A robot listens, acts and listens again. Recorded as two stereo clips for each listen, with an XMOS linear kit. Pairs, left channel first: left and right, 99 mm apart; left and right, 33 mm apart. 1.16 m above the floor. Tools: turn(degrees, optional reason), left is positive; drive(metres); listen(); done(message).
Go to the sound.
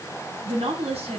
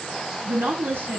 turn(degrees=-90)
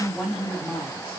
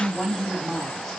turn(degrees=10, reason="So it is at 10° left.")
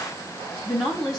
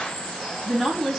drive(metres=1.0)
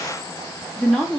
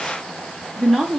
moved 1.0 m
drive(metres=1.0)
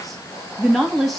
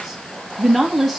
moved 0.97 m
drive(metres=1.0)
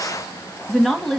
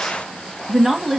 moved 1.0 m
drive(metres=1.0)
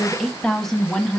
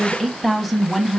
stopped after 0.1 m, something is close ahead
done("I am next to the woman speaking.")